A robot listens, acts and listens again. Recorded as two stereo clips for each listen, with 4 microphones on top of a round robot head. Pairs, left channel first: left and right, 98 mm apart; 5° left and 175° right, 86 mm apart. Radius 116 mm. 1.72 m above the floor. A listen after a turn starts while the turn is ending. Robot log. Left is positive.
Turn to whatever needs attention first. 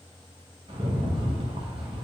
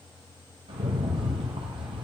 cmd idle
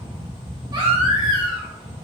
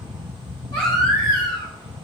note: The baby crying: 50° right.
cmd yaw -50
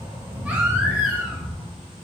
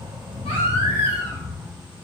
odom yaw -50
cmd idle
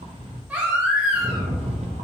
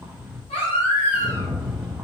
note: The baby crying is now 10° right.
cmd yaw -10
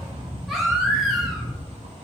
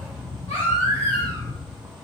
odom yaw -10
end: Found it: a baby crying, straight ahead, 1 to 2 m away.